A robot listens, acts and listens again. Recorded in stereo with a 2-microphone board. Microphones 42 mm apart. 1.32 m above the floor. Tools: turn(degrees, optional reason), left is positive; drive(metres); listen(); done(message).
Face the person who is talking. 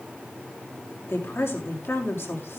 turn(degrees=90)
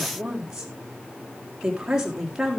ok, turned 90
turn(degrees=-10, reason="So it is at 10° right.")
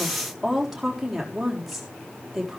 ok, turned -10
done("Found it: a woman speaking, straight ahead, 2 to 4 m away.")